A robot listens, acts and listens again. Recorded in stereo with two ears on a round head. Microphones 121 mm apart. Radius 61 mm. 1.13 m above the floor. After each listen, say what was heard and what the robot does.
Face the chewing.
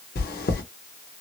Turn 90° left.
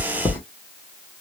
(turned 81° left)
So it is at 15° left. Turn 15° left.
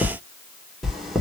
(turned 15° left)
Found it: chewing, straight ahead, under 1 m away.